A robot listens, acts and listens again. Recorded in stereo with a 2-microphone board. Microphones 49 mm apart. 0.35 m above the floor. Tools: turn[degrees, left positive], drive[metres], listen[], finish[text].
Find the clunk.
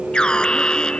Action: listen[]
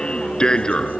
Action: listen[]
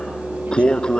Action: finish[I can't make out a clunk, only an alarm.]